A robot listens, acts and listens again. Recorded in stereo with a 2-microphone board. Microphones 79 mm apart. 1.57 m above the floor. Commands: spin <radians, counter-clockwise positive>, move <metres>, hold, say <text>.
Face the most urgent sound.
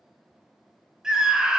spin -0.52
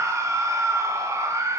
spin -2.44
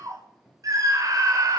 spin -0.87
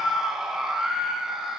say Facing the scream.